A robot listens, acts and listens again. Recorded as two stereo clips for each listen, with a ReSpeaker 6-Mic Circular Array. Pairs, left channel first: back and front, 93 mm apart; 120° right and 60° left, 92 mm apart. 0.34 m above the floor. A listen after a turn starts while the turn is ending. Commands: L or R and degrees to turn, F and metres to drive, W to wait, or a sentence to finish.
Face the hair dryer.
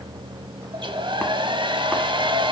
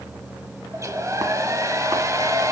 L10
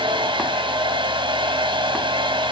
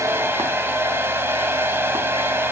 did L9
Facing the hair dryer, 1 to 2 m away.